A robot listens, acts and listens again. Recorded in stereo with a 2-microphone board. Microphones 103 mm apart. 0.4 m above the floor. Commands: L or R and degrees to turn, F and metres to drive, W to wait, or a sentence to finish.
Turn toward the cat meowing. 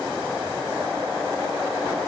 W
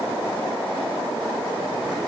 W
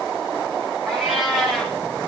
R30
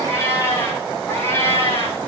L25
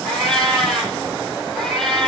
Found it: a cat meowing, straight ahead.